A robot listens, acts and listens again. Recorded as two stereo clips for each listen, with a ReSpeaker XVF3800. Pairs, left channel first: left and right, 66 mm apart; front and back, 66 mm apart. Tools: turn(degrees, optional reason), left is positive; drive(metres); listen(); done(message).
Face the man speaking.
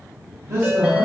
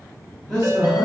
turn(degrees=-105, reason="The man speaking: 105° right.")
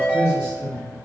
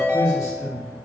turn(degrees=20, reason="The man speaking is now 20° left.")
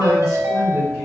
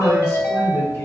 done("Found it: a man speaking, straight ahead.")